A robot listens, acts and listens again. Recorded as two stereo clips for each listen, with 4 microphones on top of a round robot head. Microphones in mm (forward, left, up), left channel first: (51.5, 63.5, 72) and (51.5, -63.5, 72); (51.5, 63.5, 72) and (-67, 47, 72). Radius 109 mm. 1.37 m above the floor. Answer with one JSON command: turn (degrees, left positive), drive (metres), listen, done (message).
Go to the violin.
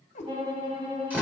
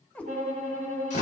{"turn": -150}
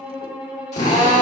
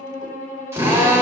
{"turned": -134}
{"turn": -10}
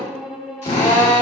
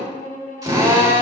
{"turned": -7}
{"drive": 1.0}
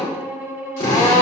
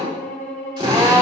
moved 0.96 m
{"turn": -15}
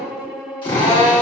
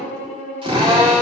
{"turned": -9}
{"drive": 1.0}
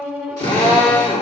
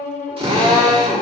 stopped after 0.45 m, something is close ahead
{"done": "I am next to the violin."}